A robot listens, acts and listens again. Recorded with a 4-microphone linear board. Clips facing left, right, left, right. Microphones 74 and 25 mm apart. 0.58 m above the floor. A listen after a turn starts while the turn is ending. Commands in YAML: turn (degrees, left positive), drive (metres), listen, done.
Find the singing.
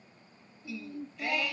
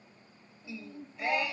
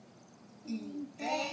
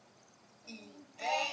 turn: -25
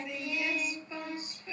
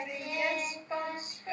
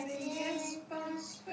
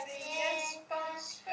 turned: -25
turn: -130
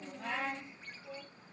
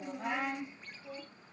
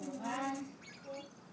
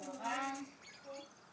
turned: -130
done: "Facing the singing."